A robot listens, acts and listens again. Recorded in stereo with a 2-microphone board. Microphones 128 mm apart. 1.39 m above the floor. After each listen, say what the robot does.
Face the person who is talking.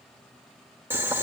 Keep listening.
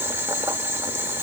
Keep listening.
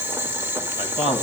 Turn 50° left.
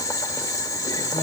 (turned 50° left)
Keep listening.
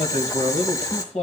Turn 75° left.
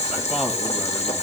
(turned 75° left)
Keep listening.
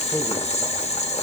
Keep listening.
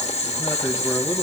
Facing where the man speaking came from. I can't hear it now.